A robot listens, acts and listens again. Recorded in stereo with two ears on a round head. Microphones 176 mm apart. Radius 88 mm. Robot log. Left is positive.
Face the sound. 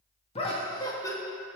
note: The laughter: about 15° left or 165° left.
cmd yaw +15
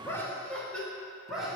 cmd yaw -30
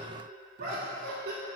note: So it is at 130° right.
cmd yaw -130
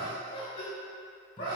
note: The laughter is now 25° left.
cmd yaw +25
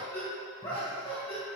note: The laughter is now 10° left.
cmd yaw +10
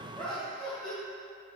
end: Found it: laughter, straight ahead.